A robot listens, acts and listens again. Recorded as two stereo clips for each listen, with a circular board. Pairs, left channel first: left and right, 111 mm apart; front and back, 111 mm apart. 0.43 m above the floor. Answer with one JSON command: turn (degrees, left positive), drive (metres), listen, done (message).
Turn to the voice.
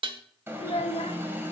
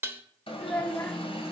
{"turn": 70}
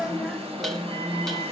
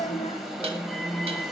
{"listen": true}
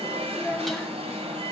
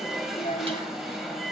{"done": "Found it: a child speaking, straight ahead, under 1 m away."}